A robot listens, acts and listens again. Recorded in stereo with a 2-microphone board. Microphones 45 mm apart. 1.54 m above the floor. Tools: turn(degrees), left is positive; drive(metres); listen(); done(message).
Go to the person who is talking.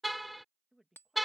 turn(degrees=-30)
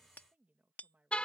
turn(degrees=-145)
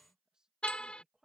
turn(degrees=-15)
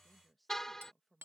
drive(metres=1.0)
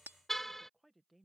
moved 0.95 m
drive(metres=1.0)
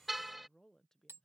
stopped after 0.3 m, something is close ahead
turn(degrees=10)
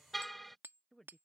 done("Arrived at the woman speaking, straight ahead.")